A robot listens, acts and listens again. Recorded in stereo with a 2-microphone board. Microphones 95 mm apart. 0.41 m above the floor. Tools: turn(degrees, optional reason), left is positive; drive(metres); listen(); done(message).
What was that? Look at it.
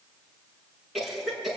turn(degrees=30)
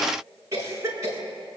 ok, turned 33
turn(degrees=-30, reason="So it is at 30° right.")
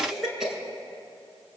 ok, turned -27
done("Found it: a cough, straight ahead, over 4 m away.")